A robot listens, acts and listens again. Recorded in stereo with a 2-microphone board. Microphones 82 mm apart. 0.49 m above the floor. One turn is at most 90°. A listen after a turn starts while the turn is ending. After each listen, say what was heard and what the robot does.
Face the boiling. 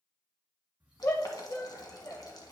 The boiling: about 55° left or 125° left. Turn 55° left.
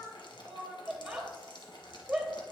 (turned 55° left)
So it is at 70° left. Turn 70° left.
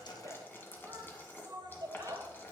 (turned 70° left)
The boiling is now 25° left. Turn 25° left.
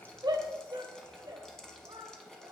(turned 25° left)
The boiling is now 10° left. Turn 10° left.
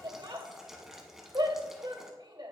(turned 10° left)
Found it: boiling, straight ahead, 1 to 2 m away.